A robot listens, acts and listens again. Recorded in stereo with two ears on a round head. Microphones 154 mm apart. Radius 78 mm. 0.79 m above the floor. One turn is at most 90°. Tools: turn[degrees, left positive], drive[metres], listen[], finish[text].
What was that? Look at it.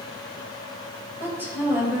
Action: turn[-30]
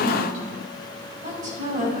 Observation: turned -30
Thought: So it is at 130° right.
Action: turn[-90]
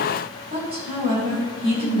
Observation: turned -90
Thought: The woman speaking is now 30° right.
Action: turn[-30]
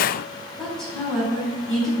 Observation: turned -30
Action: finish[Found it: a woman speaking, straight ahead, over 4 m away.]